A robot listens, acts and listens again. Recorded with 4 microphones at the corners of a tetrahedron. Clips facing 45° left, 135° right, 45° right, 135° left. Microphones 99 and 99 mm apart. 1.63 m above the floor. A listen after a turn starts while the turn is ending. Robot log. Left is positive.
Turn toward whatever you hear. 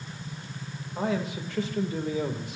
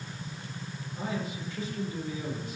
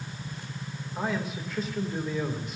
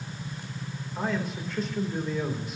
note: The man speaking: 45° left.
cmd yaw +45
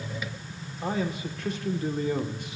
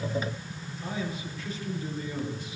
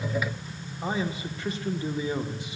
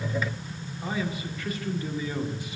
note: The man speaking is now 20° left.
cmd yaw +20
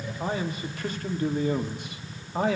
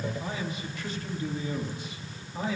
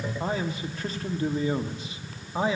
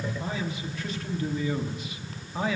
note: The man speaking is now 20° left.
cmd yaw +20
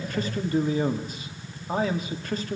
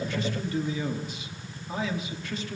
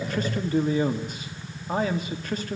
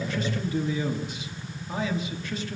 end: Facing the man speaking, 1 to 2 m away.